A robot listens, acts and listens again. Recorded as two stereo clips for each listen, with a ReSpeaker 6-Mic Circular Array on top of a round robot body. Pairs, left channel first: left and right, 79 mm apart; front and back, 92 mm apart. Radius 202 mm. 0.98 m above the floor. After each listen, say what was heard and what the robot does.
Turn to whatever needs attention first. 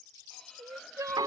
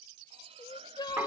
The crying: 45° right. Turn 45° right.
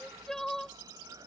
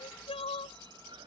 Facing the crying.